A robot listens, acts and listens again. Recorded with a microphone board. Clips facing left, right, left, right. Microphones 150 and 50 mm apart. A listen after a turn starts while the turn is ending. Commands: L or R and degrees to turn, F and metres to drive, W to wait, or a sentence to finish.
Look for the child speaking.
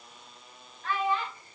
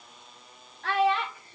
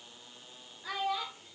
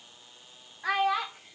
R90
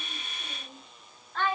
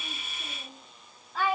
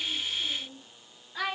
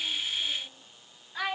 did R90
R10
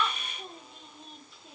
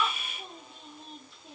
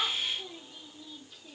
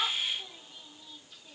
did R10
W
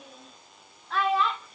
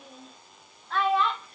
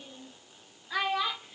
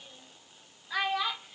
Found it: a child speaking, straight ahead, 1 to 2 m away.